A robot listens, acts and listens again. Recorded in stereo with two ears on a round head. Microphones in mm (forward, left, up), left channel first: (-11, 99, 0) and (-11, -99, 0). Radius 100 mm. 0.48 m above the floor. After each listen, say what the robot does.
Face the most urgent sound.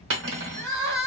Turn 45° right.
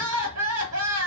Turn 85° right.
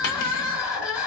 Facing the crying.